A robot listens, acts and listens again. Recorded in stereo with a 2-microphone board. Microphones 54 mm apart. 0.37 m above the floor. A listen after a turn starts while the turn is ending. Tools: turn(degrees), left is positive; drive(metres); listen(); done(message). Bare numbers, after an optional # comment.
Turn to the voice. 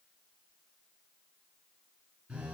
listen()
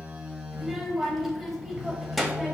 turn(30)
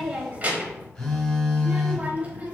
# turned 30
# So it is at 35° right.
turn(-35)
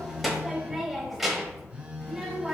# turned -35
done("Found it: a child speaking, straight ahead, under 1 m away.")